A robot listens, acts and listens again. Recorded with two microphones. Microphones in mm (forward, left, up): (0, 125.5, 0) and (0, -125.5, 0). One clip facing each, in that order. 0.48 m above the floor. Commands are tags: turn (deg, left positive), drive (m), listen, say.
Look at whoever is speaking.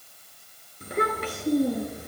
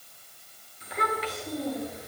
<turn deg="55"/>
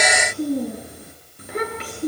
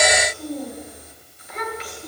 <turn deg="60"/>
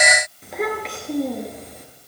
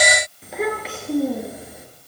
<say>Found it: a child speaking, straight ahead.</say>